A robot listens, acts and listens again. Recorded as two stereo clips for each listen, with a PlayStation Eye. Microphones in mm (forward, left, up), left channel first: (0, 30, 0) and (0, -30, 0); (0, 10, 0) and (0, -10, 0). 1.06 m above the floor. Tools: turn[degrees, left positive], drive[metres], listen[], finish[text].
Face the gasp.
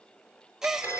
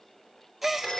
Action: turn[-30]
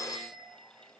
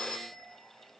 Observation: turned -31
Action: listen[]
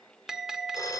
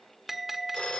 Action: finish[I heard a gasp, but can't make it out now. It was about 25° left or 140° right.]